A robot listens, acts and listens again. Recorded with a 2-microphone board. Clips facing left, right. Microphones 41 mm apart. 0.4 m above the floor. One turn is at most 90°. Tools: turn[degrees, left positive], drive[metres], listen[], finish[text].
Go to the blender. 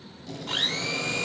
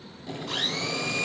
Thought: The blender: about 55° left or 125° left.
Action: turn[55]
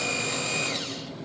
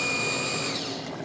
Thought: So it is at 55° left.
Action: turn[55]
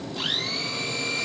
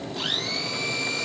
Action: drive[1.0]
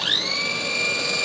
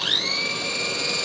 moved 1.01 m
Action: drive[1.0]
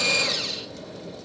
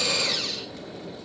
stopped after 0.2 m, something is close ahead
Action: finish[Arrived at the blender, straight ahead.]